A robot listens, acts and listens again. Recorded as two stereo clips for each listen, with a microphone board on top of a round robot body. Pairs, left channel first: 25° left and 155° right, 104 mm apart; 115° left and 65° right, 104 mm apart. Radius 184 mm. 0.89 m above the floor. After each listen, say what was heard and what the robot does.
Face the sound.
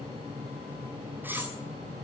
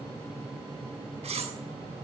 The cutlery clinking: 85° right. Turn 85° right.
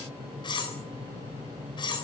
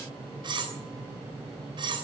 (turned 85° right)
The cutlery clinking is now 25° right. Turn 25° right.
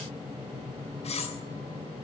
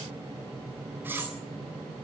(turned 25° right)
Facing the cutlery clinking.